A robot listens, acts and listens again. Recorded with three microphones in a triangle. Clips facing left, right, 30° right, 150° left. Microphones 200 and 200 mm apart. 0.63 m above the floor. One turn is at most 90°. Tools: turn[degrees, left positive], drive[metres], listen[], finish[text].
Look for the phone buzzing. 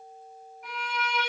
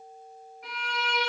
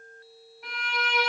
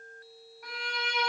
Action: listen[]
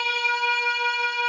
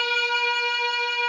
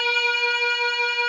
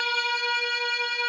Action: listen[]
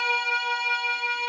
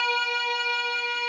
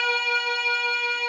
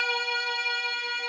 Action: finish[I can't make out a phone buzzing to turn to.]